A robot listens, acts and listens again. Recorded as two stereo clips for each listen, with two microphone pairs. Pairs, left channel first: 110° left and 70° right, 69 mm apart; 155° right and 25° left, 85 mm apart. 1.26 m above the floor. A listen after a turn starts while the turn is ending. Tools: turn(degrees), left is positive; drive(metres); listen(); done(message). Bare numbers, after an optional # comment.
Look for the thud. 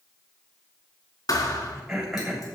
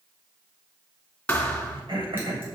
# The thud: 130° left.
turn(130)
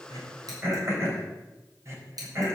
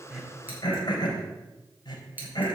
done("Facing where the thud came from. I can't hear it now.")